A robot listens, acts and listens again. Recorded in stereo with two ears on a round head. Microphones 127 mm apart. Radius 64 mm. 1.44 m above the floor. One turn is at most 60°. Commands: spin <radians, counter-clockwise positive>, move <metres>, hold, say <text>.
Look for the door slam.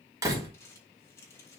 spin -0.44
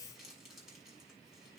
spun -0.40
hold
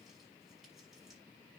say I heard a door slam, but can't make it out now. It was about straight ahead or 135° right.